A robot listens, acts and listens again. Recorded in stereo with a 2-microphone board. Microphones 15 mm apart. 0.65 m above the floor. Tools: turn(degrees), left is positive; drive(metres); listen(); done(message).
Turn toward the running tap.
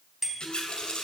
turn(degrees=90)
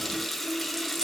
done("Facing the running tap, 2 to 4 m away.")